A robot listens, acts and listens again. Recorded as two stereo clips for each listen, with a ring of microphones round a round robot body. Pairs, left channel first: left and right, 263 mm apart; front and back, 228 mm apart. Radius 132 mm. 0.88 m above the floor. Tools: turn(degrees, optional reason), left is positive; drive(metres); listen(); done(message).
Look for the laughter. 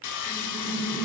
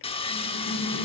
turn(degrees=10, reason="The laughter: 10° left.")
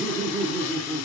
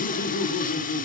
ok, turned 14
turn(degrees=10, reason="The laughter is now 10° left.")
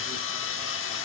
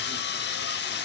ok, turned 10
listen()
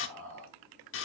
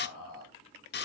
done("Facing the laughter, 2 to 4 m away.")